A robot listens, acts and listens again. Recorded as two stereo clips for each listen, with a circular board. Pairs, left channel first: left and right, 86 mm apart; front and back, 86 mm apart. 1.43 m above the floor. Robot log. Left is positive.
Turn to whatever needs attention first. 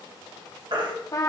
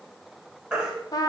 note: The baby crying: 100° right.
cmd yaw -100
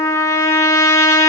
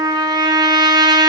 cmd idle
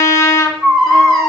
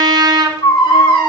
end: Facing the baby crying.